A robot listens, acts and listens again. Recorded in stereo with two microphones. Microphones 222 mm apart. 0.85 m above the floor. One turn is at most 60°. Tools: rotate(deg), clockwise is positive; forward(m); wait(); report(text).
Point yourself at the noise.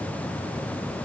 wait()
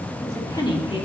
rotate(-25)
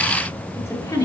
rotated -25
rotate(-15)
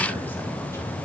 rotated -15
wait()
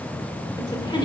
rotate(-20)
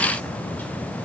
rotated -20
wait()
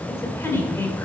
rotate(-30)
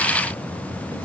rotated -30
wait()
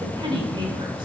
rotate(20)
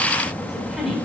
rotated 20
report("Facing the woman speaking, 2 to 4 m away.")